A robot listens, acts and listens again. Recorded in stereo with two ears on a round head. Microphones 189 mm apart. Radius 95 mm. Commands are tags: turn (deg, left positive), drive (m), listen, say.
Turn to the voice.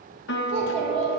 <turn deg="-55"/>
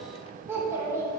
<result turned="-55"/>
<turn deg="-15"/>
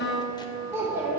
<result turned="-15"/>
<turn deg="-15"/>
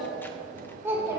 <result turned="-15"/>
<turn deg="-15"/>
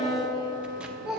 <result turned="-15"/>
<say>Facing the child speaking.</say>